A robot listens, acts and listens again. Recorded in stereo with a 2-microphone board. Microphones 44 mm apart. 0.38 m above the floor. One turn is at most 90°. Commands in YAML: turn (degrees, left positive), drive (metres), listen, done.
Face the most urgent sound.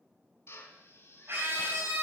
turn: -55
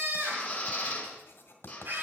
turn: -55
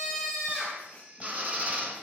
done: "Found it: a scream, straight ahead."